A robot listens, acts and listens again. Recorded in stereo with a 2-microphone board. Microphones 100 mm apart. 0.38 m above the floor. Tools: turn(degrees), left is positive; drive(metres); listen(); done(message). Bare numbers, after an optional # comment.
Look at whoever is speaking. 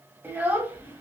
# The child speaking: about 20° right or 160° right.
turn(-20)
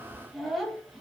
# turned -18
done("Facing the child speaking.")